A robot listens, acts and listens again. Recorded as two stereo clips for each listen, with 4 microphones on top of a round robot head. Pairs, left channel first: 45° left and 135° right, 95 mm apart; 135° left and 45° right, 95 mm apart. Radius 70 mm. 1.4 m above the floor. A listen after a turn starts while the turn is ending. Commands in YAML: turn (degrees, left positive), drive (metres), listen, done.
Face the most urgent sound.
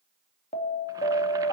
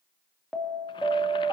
turn: 45
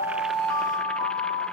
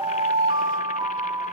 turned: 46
done: "Facing the alarm, 2 to 4 m away."